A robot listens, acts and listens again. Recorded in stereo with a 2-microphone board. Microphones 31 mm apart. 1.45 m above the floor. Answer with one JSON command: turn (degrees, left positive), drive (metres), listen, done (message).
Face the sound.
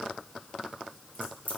{"turn": 90}
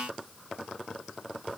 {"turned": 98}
{"turn": -10}
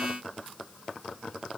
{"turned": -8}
{"done": "I heard a crack from this way, but can't make it out now."}